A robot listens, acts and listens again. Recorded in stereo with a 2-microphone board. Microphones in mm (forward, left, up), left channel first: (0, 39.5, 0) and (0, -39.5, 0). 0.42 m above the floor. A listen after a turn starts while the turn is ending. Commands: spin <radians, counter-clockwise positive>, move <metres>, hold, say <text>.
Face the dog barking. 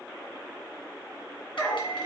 spin 0.52
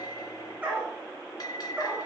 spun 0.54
spin -0.26
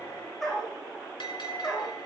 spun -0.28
say Found it: a dog barking, straight ahead.